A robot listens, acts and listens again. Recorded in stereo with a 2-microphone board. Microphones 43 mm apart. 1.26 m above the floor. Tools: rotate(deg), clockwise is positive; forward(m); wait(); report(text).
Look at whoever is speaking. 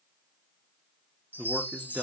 rotate(35)
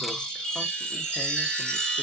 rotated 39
wait()
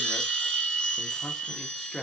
report("Facing the man speaking, under 1 m away.")